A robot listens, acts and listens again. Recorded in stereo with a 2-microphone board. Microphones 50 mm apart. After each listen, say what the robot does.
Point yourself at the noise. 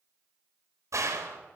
Turn 90° right.
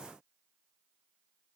I heard a gunshot from this way, but can't make it out now.